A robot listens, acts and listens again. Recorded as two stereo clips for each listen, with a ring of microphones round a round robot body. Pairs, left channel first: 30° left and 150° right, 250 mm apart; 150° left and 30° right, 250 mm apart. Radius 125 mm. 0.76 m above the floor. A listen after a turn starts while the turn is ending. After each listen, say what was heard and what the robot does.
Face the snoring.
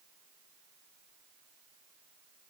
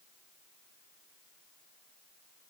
Keep listening.
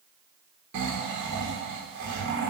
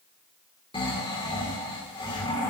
The snoring: 140° right. Turn 140° right.
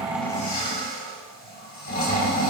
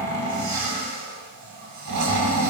The snoring is now 25° right. Turn 25° right.
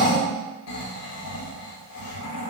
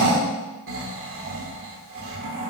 Found it: snoring, straight ahead, 2 to 4 m away.